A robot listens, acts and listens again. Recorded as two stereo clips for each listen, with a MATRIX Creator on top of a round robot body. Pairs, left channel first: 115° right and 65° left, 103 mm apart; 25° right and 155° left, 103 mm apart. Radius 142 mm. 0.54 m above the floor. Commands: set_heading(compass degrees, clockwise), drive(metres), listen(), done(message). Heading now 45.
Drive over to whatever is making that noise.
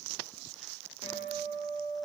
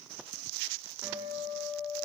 set_heading(185)
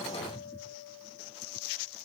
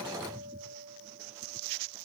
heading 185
set_heading(155)
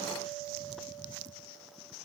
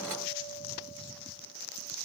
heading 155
listen()
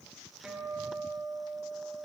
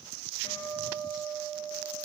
set_heading(170)
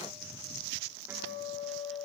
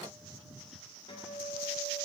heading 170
drive(1.0)
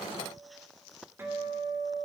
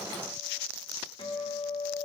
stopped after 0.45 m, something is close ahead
done("Something is in my way. I am facing the guitar but have not reached it.")